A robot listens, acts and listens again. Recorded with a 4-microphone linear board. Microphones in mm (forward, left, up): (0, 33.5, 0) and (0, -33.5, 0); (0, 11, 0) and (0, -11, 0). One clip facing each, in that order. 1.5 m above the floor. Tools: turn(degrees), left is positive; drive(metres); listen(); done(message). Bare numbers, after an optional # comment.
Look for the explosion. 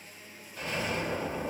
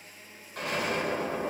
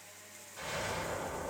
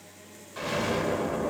# The explosion: about 65° right or 115° right.
turn(-65)
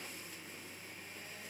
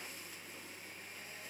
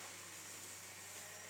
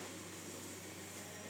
listen()
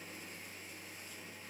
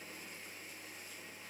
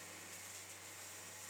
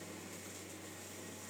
done("I heard an explosion, but can't make it out now. It was about straight ahead or 50° right.")